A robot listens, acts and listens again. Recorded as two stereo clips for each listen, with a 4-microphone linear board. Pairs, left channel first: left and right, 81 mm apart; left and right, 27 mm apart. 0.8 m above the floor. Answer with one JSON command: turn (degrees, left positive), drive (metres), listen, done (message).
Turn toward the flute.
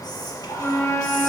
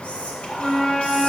{"turn": 30}
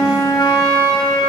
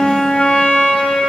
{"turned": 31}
{"turn": 115}
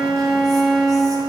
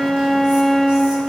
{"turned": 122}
{"done": "Facing the flute."}